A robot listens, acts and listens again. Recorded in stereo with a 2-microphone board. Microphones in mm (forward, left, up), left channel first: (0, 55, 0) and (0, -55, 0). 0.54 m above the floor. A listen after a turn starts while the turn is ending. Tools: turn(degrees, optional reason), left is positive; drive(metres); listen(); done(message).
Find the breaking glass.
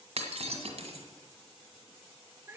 turn(degrees=-75, reason="The breaking glass: about 75° right or 105° right.")
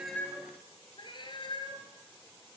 listen()
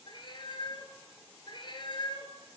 done("I heard breaking glass, but can't make it out now. It was about straight ahead or 30° right.")